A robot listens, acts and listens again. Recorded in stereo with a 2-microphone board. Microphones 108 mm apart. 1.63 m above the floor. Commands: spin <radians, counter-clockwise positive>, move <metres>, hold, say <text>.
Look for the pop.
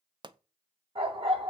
spin -0.79
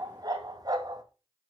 hold
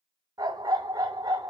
say I heard a pop, but can't make it out now. It was about straight ahead or 90° right.